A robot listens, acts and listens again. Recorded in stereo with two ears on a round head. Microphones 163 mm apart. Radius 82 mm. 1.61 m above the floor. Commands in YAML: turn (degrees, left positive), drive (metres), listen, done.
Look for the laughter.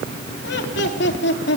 turn: 65
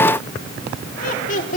turn: 45
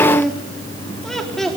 done: "Found it: laughter, straight ahead, 2 to 4 m away."